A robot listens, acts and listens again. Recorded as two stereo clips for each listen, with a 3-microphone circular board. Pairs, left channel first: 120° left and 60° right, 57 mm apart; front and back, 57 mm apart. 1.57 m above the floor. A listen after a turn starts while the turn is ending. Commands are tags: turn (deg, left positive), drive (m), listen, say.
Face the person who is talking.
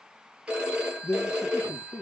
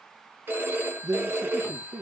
<turn deg="165"/>
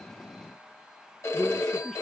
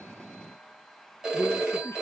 <turn deg="35"/>
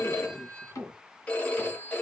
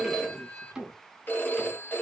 <turn deg="-10"/>
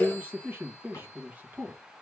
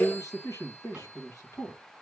<say>Facing the man speaking.</say>